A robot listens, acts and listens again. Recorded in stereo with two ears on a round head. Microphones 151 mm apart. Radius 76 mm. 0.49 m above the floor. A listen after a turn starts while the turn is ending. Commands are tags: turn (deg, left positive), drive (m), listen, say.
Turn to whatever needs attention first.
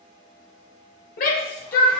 <turn deg="55"/>
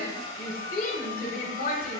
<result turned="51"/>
<turn deg="60"/>
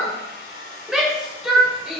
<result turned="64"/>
<say>Found it: a shout, straight ahead, 1 to 2 m away.</say>